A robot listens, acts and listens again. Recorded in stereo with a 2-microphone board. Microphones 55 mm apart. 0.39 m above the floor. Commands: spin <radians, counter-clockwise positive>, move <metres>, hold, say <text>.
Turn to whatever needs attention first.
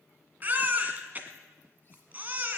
spin -0.52
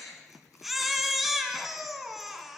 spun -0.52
say Facing the baby crying, 1 to 2 m away.